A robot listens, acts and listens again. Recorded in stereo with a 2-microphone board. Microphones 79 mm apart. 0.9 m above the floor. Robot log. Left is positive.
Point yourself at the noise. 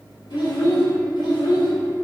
cmd yaw +90
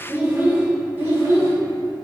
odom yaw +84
note: So it is at 35° right.
cmd yaw -35
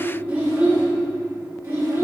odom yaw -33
note: The child speaking is now 35° right.
cmd yaw -35
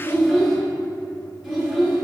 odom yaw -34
end: Found it: a child speaking, straight ahead, 1 to 2 m away.